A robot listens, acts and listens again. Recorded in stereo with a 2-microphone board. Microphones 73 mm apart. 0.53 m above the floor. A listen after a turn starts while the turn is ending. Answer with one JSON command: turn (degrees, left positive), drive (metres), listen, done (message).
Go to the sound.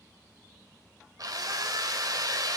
{"turn": -65}
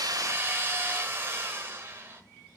{"turn": -35}
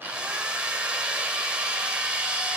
{"turn": -15}
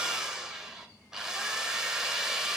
{"turn": -10}
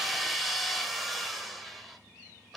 {"drive": 1.0}
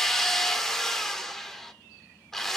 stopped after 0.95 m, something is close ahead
{"turn": 10}
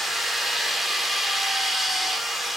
{"done": "Arrived at the drill, straight ahead."}